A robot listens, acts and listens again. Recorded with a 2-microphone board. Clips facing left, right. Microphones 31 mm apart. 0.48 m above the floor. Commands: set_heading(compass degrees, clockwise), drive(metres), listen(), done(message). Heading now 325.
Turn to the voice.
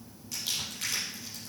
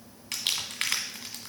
listen()
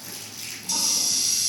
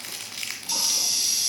listen()
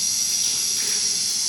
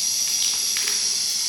done("I can't make out anyone speaking to turn to.")